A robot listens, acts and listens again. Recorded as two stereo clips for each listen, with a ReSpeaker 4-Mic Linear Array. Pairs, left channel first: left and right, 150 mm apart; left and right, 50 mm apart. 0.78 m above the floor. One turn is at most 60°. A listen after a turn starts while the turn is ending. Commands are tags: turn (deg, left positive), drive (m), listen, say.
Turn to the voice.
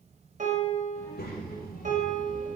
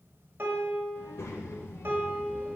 <turn deg="60"/>
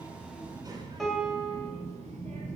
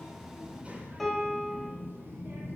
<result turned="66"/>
<turn deg="-55"/>
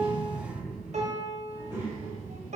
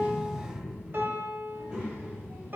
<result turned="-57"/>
<turn deg="-20"/>
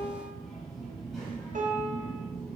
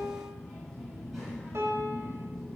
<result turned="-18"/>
<say>Found it: a child speaking, straight ahead, 2 to 4 m away.</say>